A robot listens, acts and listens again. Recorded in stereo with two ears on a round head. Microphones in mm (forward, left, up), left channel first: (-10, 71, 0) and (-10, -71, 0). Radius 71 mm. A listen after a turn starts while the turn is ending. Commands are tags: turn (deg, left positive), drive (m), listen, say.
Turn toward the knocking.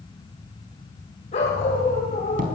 <turn deg="-60"/>
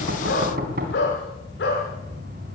<turn deg="-60"/>
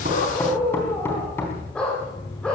<turn deg="15"/>
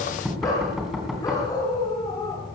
<say>Facing the knocking, over 4 m away.</say>